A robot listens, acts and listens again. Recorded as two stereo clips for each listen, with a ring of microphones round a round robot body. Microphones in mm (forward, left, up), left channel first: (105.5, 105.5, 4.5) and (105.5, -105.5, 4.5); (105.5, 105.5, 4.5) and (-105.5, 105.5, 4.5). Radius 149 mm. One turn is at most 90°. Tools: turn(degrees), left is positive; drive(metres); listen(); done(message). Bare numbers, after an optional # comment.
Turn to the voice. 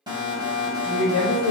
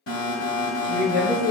# The woman speaking: 20° left.
turn(20)
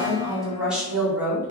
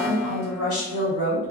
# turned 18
# The woman speaking is now 10° right.
turn(-10)
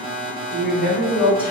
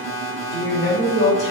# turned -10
done("Facing the woman speaking.")